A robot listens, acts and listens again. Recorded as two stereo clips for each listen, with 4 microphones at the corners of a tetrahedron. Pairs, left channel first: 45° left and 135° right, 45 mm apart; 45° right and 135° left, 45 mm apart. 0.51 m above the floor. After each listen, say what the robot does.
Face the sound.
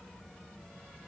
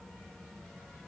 Keep listening.
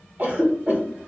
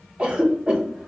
Turn 165° right.
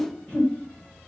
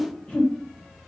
Turn 10° left.
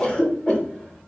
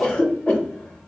Found it: a cough, straight ahead, 1 to 2 m away.